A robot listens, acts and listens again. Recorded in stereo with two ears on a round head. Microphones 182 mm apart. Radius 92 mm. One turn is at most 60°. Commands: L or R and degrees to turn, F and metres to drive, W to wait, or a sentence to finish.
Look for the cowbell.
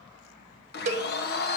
R35
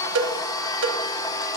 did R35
R60
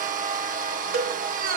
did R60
R45
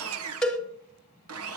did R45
Facing the cowbell.